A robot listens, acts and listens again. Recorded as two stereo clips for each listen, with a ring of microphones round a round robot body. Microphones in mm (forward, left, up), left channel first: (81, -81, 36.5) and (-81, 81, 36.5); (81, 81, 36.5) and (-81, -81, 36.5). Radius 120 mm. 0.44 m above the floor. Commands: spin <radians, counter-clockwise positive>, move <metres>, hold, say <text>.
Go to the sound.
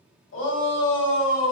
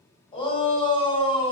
spin -0.35
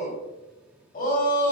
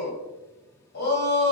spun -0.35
move 1.0
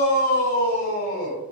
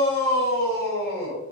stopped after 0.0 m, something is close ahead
say Blocked. The shout is further on, straight ahead.